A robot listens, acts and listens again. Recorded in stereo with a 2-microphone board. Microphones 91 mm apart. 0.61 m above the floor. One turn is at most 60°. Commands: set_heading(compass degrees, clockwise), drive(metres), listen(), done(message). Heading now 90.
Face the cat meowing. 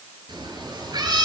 set_heading(135)
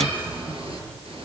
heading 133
set_heading(193)
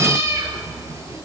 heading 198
set_heading(233)
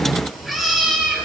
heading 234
done("Facing the cat meowing, over 4 m away.")